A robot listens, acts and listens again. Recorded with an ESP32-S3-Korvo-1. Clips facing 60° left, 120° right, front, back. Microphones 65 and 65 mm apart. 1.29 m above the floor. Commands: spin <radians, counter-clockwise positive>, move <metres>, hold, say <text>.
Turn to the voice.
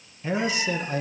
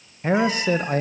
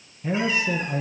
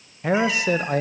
spin -2.88
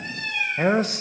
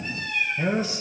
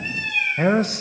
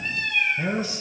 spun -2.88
spin 0.52
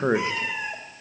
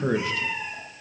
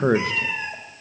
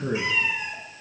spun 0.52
say Found it: a man speaking, straight ahead.